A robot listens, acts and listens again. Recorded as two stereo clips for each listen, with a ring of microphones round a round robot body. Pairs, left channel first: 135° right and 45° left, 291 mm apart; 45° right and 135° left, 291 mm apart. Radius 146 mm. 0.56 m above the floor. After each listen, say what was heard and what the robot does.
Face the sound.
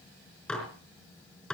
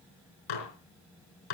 The dishes clattering: 50° right. Turn 50° right.
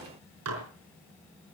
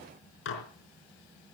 Found it: dishes clattering, straight ahead, over 4 m away.